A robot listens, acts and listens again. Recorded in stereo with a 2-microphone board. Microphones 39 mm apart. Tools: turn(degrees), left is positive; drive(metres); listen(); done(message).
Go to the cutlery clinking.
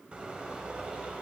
listen()
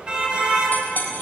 turn(degrees=45)
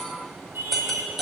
drive(metres=1.0)
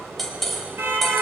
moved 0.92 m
drive(metres=1.0)
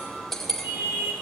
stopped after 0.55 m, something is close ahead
done("Something is in my way. I am facing the cutlery clinking but have not reached it.")